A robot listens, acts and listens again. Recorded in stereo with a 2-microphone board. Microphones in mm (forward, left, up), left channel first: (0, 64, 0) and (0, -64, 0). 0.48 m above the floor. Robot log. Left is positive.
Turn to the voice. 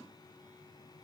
cmd idle
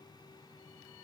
cmd idle
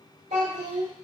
note: The child speaking: about 65° right or 115° right.
cmd yaw -65
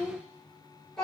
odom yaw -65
end: Facing the child speaking, 1 to 2 m away.